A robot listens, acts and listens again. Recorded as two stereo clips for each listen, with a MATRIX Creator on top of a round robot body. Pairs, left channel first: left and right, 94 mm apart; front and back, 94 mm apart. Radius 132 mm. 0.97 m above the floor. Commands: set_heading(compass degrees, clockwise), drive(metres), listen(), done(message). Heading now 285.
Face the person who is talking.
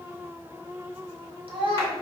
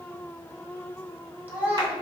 set_heading(30)
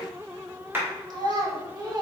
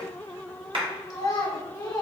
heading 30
set_heading(75)
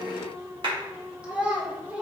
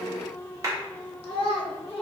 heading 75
set_heading(90)
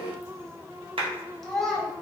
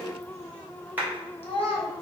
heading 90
done("Found it: a child speaking, straight ahead.")